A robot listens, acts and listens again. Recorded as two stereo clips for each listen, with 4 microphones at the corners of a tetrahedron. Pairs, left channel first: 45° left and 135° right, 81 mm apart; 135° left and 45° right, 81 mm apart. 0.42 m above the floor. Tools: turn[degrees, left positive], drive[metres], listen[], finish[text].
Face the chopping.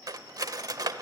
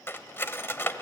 Action: listen[]
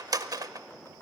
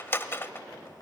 Action: listen[]
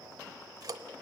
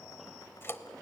Action: finish[I can't make out chopping, only cutlery clinking.]